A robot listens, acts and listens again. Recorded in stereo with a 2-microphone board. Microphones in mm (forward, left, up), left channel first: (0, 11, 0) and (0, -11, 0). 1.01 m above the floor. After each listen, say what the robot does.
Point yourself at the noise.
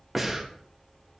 Turn 30° right.
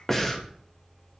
Turn 20° left.
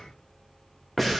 Facing the breathing, 1 to 2 m away.